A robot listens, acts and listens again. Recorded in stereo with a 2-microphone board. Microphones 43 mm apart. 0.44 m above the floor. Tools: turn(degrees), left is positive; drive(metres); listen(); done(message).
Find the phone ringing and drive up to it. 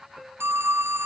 turn(degrees=-90)
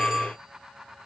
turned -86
turn(degrees=-15)
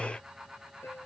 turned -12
listen()
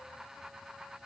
listen()
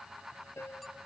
done("I heard a phone ringing from this way, but can't make it out now. I did not reach it.")